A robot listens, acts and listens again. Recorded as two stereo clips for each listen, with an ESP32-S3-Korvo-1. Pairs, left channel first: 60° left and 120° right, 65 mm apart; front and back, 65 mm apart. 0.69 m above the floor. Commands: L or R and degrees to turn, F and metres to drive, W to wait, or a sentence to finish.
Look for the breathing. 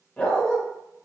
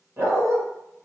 W
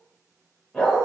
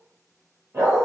W
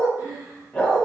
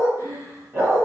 R175
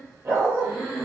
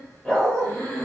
R25
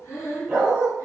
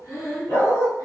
L10
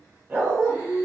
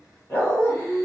Found it: breathing, straight ahead, 1 to 2 m away.